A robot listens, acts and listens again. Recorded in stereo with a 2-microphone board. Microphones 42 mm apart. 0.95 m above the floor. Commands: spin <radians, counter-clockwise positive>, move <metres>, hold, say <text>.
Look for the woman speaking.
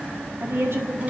spin -1.57
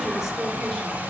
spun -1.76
spin 0.17
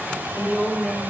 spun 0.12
spin -0.17
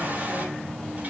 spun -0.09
hold
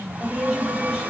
say Facing the woman speaking, over 4 m away.